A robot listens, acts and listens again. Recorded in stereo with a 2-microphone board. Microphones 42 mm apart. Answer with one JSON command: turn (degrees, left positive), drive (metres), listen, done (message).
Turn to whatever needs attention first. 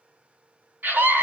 {"turn": -50}
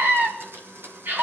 {"turn": -70}
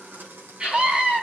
{"turn": -30}
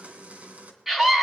{"done": "Found it: a scream, straight ahead, 2 to 4 m away."}